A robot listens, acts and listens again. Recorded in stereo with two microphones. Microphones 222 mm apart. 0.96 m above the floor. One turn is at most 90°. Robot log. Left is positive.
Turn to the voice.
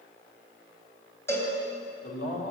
cmd yaw +90
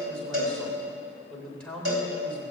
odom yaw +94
end: Facing the man speaking.